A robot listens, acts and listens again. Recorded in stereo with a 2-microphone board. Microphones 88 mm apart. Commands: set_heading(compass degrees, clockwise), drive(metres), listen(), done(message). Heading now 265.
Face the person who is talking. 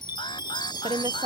set_heading(355)
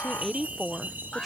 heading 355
done("Facing the woman speaking.")